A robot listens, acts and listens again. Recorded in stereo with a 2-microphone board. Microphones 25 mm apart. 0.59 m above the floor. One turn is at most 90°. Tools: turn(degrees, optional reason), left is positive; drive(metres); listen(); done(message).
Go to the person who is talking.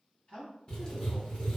turn(degrees=60, reason="The man speaking: about 60° left or 120° left.")
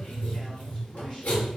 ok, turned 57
listen()
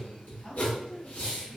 turn(degrees=40, reason="So it is at 40° left.")
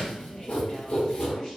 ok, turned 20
turn(degrees=20, reason="Nothing new. It was at 20° left.")
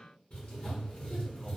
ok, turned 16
listen()
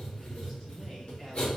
done("Facing where the man speaking came from. I can't hear it now. I did not reach it.")